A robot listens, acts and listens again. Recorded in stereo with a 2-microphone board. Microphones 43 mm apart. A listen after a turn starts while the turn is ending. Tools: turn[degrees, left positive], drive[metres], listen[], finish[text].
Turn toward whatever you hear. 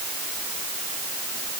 Action: listen[]
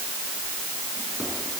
Action: listen[]
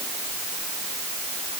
Action: finish[I can't make out anything.]